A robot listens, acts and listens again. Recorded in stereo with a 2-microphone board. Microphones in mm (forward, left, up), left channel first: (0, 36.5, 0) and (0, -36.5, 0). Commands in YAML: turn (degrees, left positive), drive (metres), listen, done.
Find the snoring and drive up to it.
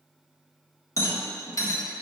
listen: true
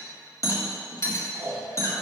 turn: -50
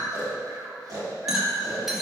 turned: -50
turn: -75
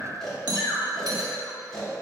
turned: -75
turn: 10
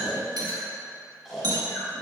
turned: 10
drive: 1.0
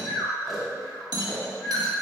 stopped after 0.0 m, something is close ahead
done: "Something is in my way. I am facing the snoring but have not reached it."